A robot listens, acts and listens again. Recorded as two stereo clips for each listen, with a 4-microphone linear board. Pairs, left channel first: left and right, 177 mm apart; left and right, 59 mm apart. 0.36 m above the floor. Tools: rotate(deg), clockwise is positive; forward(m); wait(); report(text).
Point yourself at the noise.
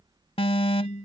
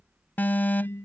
rotate(-30)
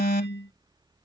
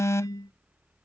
rotate(-110)
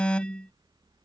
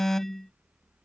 report("Facing the alarm.")